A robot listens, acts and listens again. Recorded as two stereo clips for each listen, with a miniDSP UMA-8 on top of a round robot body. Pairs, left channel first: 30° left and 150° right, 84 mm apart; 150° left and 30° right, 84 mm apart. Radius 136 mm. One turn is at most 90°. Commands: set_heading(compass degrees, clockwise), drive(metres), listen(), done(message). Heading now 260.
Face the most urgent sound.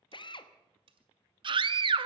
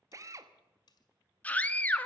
set_heading(350)
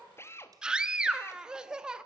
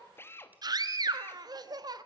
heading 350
set_heading(60)
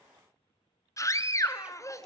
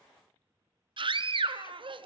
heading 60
set_heading(80)
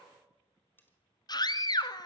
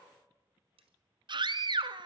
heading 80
done("Facing the scream.")